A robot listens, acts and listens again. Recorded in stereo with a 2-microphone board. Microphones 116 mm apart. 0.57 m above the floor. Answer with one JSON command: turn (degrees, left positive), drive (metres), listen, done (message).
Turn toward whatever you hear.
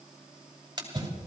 {"turn": -35}
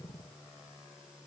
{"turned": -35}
{"listen": true}
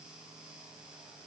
{"done": "I heard a splash, but can't make it out now. It was about straight ahead or 110° right."}